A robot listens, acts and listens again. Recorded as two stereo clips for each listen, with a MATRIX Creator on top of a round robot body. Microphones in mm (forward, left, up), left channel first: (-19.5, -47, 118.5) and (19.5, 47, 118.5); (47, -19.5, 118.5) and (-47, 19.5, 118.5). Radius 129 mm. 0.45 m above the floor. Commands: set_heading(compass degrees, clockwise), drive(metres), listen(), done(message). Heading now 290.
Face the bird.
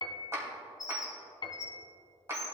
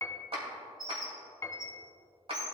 set_heading(90)
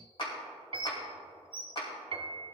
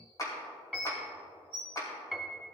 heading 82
set_heading(92)
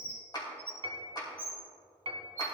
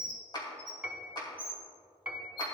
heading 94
done("Facing the bird.")